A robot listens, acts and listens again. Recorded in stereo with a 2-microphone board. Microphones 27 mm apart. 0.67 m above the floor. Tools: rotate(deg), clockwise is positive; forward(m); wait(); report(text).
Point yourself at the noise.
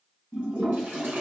rotate(90)
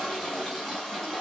report("Facing the toilet flushing.")